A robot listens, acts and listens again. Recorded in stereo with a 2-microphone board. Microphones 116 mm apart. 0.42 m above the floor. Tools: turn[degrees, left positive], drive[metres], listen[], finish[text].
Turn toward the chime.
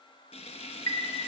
Thought: The chime: about 30° left or 150° left.
Action: turn[30]
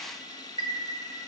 Thought: So it is at 115° left.
Action: turn[115]
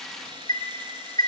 Thought: The chime is now 35° left.
Action: turn[35]
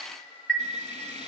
Action: finish[Found it: a chime, straight ahead.]